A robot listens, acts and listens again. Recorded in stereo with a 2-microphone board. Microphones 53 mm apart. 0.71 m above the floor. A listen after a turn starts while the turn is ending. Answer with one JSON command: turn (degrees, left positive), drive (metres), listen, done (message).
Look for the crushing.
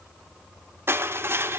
{"turn": -45}
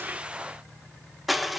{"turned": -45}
{"done": "Facing the crushing, 1 to 2 m away."}